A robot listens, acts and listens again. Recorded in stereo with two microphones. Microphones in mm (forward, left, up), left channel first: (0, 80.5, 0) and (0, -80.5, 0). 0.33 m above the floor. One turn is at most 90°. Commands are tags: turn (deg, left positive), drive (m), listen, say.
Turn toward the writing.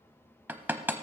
<listen/>
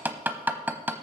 <listen/>
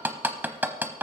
<say>I can't make out writing to turn to.</say>